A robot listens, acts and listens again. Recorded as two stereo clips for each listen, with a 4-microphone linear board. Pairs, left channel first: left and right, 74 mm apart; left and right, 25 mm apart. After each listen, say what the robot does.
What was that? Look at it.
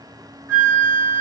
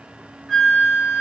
Turn 35° right.
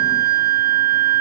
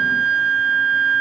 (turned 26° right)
Turn 20° right.
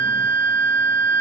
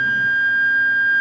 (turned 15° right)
Facing the flute, 1 to 2 m away.